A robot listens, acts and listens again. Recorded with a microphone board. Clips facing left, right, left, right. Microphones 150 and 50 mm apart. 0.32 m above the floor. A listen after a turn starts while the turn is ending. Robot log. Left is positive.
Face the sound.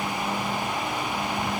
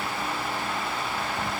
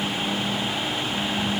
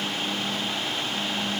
cmd idle
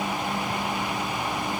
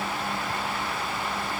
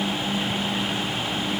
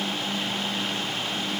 cmd idle
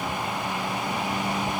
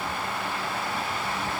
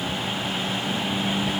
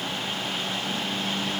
end: I can't make out anything to turn to.